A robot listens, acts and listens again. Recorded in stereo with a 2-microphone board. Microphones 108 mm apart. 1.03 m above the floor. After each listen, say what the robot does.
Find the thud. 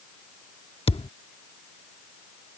Turn 60° left.
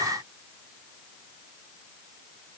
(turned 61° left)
Keep listening.
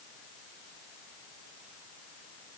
I heard a thud, but can't make it out now. It was about straight ahead or 60° left.